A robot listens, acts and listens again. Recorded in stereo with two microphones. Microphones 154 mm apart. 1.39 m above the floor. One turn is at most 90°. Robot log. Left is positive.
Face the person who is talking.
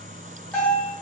cmd idle
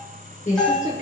note: The woman speaking: about 55° left or 125° left.
cmd yaw +55
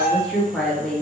end: Facing the woman speaking, under 1 m away.